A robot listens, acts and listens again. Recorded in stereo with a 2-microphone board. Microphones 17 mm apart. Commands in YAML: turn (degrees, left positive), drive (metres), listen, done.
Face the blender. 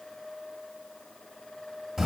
listen: true
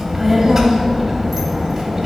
listen: true
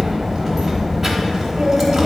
done: "I can't make out a blender to turn to."